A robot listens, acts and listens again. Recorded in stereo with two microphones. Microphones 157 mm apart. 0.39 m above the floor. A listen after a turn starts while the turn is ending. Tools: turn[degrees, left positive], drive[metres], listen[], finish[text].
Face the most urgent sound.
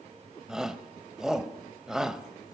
Action: turn[-30]
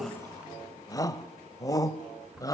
Thought: So it is at 25° left.
Action: turn[25]
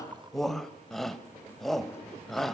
Action: finish[Found it: a shout, straight ahead.]